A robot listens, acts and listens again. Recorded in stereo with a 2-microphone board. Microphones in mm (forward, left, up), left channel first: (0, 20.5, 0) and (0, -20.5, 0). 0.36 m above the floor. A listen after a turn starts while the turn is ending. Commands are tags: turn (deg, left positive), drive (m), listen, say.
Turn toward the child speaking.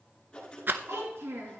<turn deg="-75"/>
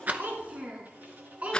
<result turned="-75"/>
<turn deg="-35"/>
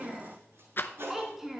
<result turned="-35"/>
<turn deg="-10"/>
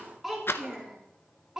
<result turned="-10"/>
<turn deg="-15"/>
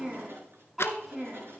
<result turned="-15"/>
<turn deg="-10"/>
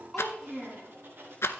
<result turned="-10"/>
<say>Facing the child speaking.</say>